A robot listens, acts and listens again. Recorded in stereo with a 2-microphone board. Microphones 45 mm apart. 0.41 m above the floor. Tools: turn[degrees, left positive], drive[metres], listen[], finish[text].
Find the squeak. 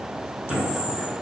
Action: turn[-30]
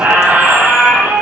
Thought: So it is at 140° right.
Action: turn[-140]
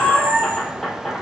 Action: finish[Facing the squeak.]